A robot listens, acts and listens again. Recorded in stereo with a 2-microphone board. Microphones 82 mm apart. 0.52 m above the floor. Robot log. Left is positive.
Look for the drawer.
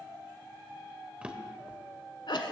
cmd yaw -30
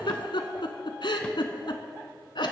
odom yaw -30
cmd idle
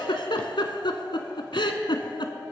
cmd idle
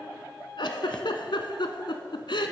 end: I heard a drawer, but can't make it out now. It was about 15° left or 135° right.